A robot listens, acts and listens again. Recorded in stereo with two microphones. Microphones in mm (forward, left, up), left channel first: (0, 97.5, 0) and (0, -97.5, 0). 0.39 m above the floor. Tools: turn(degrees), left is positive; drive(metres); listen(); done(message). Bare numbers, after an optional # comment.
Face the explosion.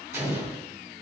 turn(-30)
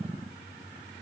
listen()
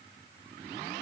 done("I heard an explosion, but can't make it out now. It was about 15° left or 135° right.")